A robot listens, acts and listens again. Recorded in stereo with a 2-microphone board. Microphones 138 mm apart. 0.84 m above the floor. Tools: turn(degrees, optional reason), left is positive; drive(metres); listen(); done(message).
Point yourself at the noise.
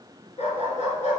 turn(degrees=60, reason="The dog barking: about 60° left or 120° left.")
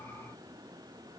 listen()
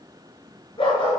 turn(degrees=35, reason="So it is at 35° left.")
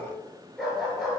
done("Facing the dog barking.")